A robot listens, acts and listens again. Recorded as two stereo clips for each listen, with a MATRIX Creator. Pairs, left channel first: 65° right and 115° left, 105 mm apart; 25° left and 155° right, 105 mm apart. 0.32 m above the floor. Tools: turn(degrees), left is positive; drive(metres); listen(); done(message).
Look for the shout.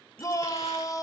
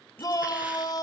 turn(degrees=-20)
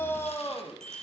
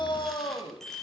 done("Found it: a shout, straight ahead, 1 to 2 m away.")